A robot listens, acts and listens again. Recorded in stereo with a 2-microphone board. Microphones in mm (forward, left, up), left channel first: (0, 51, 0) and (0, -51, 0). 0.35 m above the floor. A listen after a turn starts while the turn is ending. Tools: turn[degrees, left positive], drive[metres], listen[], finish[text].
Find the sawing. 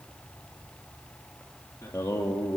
Action: listen[]
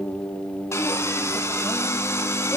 Thought: The sawing: about 30° left or 150° left.
Action: turn[30]
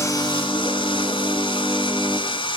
Thought: So it is at 120° left.
Action: turn[120]
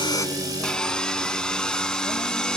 Action: finish[Facing the sawing, 1 to 2 m away.]